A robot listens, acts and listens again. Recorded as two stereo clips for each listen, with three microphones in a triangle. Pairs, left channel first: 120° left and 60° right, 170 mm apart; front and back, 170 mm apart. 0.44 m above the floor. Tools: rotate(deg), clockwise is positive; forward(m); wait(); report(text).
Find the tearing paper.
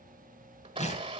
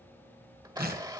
rotate(-165)
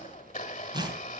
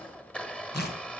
report("Found it: tearing paper, straight ahead.")